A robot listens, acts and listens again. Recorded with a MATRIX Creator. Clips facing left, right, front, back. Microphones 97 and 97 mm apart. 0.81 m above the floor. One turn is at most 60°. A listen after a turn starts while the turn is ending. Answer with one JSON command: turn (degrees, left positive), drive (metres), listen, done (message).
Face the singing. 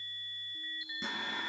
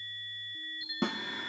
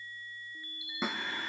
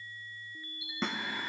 {"turn": 60}
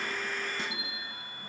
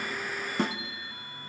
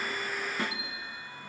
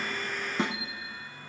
{"turn": 60}
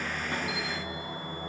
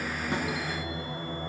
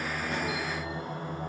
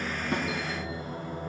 {"turn": 15}
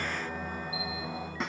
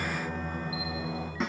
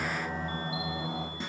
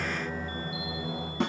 {"turn": 10}
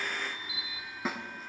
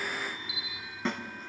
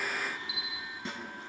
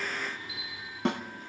{"listen": true}
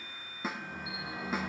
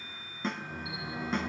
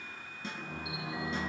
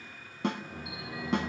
{"done": "Found it: singing, straight ahead."}